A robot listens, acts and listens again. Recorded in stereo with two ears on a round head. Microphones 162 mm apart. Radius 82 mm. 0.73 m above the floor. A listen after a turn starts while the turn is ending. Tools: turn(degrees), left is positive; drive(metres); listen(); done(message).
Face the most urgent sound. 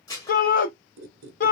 turn(degrees=50)
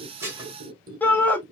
turn(degrees=10)
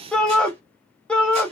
done("Found it: a shout, straight ahead, under 1 m away.")